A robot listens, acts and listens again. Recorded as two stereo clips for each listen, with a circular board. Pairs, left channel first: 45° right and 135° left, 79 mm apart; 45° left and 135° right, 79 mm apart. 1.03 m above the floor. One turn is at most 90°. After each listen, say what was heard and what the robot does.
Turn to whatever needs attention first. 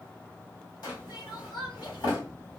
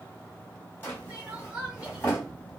The crying: 60° right. Turn 60° right.
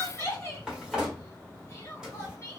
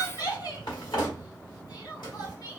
The crying is now 10° left. Turn 10° left.
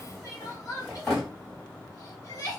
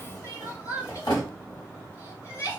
Found it: crying, straight ahead.